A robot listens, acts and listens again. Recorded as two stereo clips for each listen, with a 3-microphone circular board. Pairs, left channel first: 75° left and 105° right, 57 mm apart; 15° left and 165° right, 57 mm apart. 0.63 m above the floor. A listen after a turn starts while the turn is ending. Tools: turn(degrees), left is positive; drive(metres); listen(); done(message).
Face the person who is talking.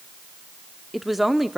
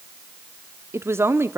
turn(degrees=170)
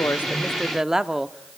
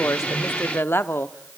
turn(degrees=-25)
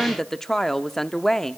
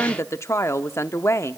done("Found it: a woman speaking, straight ahead.")